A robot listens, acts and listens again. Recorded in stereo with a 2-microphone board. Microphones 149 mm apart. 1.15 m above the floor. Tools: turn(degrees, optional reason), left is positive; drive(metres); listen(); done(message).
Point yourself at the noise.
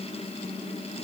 listen()
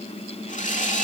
turn(degrees=55, reason="The sawing: about 55° left or 125° left.")
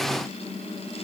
listen()
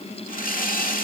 turn(degrees=70, reason="So it is at 70° left.")
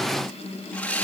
turn(degrees=10, reason="The sawing is now 10° left.")
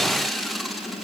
done("Found it: sawing, straight ahead, 2 to 4 m away.")